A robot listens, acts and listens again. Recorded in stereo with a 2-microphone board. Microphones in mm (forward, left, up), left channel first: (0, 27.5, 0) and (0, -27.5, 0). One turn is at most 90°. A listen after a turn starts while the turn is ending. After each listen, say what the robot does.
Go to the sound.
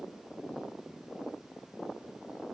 Keep listening.
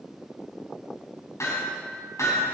Turn 65° left.
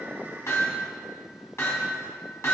Turn 50° left.
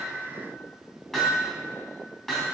Drive 1.0 m forward.
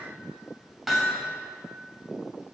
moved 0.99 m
Drive 1.0 m forward.
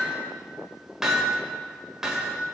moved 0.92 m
Turn 10° right.
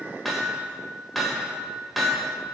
Drive 1.0 m forward.
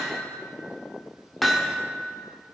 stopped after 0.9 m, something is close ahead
Arrived at the hammering, straight ahead.